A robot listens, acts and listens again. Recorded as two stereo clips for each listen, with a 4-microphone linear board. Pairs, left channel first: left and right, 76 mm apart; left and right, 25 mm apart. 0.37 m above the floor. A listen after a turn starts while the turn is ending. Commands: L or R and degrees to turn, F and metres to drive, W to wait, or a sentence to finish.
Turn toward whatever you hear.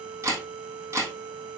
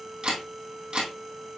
R45
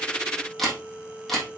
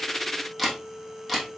Found it: a camera shutter, straight ahead, 2 to 4 m away.